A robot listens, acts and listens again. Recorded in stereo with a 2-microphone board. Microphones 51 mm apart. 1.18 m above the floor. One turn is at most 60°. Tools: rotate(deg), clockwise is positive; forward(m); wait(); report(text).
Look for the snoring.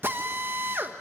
wait()
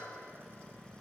wait()
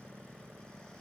report("I can't make out snoring, only a drill.")